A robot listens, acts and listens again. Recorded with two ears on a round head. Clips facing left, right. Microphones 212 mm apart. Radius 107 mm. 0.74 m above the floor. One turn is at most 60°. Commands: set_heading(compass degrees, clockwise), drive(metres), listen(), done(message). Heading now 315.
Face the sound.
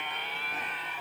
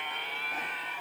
listen()
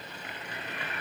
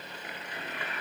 listen()
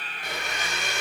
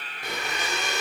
set_heading(15)
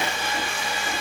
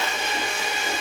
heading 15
set_heading(40)
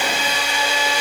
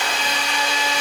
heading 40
set_heading(30)
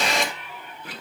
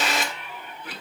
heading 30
done("Facing the blender.")